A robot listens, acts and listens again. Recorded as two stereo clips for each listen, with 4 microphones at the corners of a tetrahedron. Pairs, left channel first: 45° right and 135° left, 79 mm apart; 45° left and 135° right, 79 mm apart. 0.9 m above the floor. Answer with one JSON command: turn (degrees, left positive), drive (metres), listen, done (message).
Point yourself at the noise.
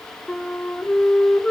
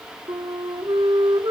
{"turn": -125}
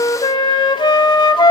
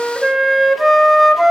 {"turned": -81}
{"turn": -45}
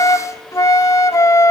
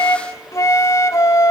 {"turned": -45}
{"done": "Facing the flute, 1 to 2 m away."}